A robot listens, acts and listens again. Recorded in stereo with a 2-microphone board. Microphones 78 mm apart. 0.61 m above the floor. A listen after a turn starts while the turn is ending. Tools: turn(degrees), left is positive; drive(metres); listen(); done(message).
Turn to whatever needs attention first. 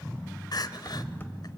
turn(degrees=55)
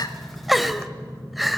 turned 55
done("Facing the crying.")